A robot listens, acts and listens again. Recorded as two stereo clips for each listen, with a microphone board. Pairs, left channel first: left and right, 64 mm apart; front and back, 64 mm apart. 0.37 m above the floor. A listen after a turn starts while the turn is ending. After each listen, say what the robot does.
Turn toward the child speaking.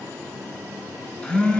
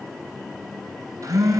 Keep listening.
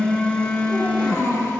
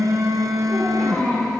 Turn 50° left.
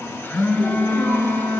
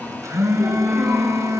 Keep listening.
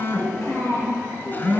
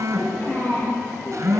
Turn 50° left.
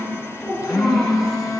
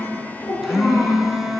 Facing the child speaking, over 4 m away.